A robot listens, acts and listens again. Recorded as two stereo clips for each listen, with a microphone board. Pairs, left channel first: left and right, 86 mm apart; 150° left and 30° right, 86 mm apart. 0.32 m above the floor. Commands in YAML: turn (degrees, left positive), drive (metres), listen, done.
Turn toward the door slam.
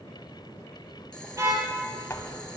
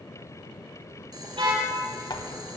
turn: 140
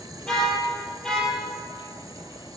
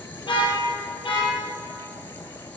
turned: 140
done: "Facing where the door slam came from. I can't hear it now."